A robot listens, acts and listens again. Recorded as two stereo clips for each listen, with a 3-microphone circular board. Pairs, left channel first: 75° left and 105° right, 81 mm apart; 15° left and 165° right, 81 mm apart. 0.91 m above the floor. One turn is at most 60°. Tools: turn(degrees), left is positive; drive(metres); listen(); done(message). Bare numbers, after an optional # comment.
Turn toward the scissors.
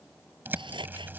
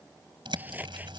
# The scissors: 95° right.
turn(-60)
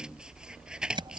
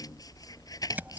# The scissors is now 25° right.
turn(-25)
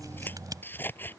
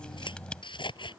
# The scissors is now 10° left.
turn(10)
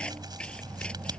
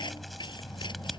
done("Found it: scissors, straight ahead.")